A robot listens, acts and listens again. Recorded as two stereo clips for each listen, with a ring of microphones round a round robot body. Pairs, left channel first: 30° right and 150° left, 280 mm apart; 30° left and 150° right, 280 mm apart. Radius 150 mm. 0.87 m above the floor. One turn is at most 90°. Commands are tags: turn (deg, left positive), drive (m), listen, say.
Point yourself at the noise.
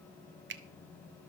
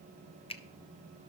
<turn deg="90"/>
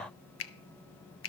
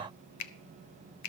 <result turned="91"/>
<turn deg="10"/>
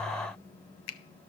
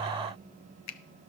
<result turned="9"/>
<say>Facing the finger snap, under 1 m away.</say>